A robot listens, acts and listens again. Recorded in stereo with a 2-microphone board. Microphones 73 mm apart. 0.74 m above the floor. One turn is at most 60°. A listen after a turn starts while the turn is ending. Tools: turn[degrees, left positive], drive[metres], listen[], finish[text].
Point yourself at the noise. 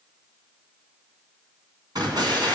Action: turn[-60]
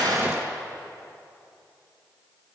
Thought: So it is at 15° right.
Action: turn[-15]
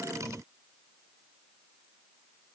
Action: finish[Facing where the explosion came from. I can't hear it now.]